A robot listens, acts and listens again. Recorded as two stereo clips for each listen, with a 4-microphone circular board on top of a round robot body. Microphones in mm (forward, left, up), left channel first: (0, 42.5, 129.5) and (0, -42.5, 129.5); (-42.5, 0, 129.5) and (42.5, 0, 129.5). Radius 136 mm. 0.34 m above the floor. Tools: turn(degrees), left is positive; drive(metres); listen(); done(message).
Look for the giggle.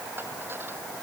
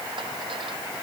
listen()
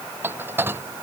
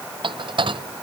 listen()
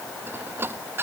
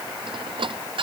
done("I can't make out a giggle to turn to.")